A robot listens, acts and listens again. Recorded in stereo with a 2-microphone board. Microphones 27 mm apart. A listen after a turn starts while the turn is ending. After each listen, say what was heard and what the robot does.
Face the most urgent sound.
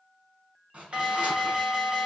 The alarm: about 45° right or 135° right. Turn 45° right.
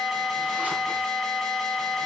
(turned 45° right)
Found it: an alarm, straight ahead.